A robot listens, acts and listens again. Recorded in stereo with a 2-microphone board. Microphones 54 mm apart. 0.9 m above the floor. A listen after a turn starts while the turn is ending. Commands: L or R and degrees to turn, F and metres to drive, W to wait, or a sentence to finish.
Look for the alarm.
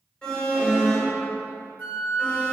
L15
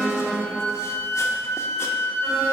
Found it: an alarm, straight ahead.